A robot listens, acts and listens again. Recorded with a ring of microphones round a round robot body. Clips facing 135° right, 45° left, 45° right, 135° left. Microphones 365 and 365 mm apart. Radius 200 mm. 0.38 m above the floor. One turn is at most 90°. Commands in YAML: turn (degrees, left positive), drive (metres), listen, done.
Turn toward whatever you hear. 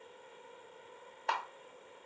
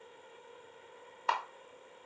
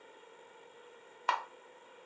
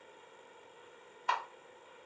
turn: -30
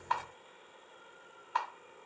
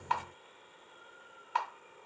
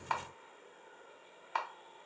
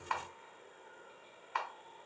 done: "Found it: a camera shutter, straight ahead, under 1 m away."